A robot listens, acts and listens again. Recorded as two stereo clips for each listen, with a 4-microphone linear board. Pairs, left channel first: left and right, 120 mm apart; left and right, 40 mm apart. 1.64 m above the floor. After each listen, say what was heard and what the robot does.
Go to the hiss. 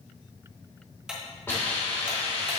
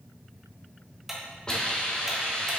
The hiss: about 20° left or 160° left. Turn 20° left.
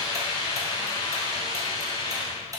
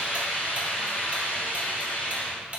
So it is at 135° left. Turn 135° left.
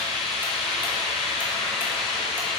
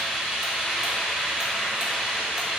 Drive 1.0 m forward.
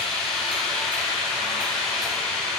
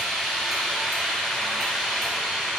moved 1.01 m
Drive 1.0 m forward.
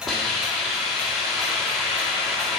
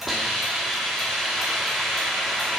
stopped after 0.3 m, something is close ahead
Arrived at the hiss, straight ahead.